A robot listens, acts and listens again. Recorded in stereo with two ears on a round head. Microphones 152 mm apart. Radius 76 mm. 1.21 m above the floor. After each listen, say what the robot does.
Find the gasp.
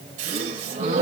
Turn 40° right.
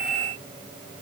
Keep listening.
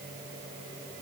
I heard a gasp, but can't make it out now. It was about straight ahead or 100° right.